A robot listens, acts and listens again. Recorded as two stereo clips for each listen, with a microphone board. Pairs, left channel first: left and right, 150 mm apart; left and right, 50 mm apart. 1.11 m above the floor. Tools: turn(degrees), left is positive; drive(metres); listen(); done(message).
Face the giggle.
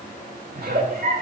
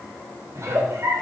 turn(degrees=-70)
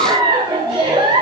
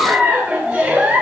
turn(degrees=-30)
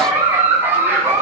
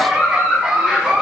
turn(degrees=-15)
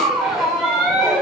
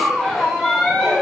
done("Found it: a giggle, straight ahead.")